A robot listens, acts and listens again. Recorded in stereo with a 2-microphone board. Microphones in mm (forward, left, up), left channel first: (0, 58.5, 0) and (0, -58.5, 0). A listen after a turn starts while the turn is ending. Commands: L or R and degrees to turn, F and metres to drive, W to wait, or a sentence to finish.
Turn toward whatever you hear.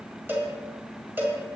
R15
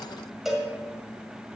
Facing the cowbell.